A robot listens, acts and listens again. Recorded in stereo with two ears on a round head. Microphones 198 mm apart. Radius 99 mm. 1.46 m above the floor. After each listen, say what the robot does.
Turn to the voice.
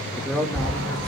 Turn 30° left.
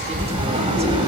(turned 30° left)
Keep listening.
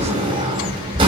Keep listening.
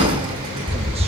I heard a man speaking, but can't make it out now. It was about 25° right or 145° left.